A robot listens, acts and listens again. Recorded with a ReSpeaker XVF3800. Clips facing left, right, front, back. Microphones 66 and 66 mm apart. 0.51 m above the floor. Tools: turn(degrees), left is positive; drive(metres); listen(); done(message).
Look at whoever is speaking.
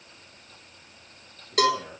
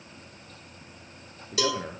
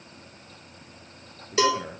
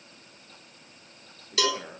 turn(degrees=-85)
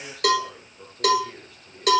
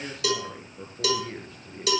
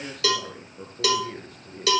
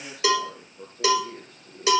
turn(degrees=-30)
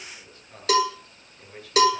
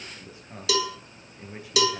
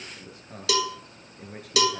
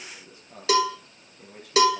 turn(degrees=-15)
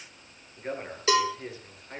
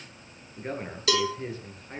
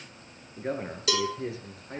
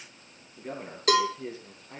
done("Found it: a man speaking, straight ahead, over 4 m away.")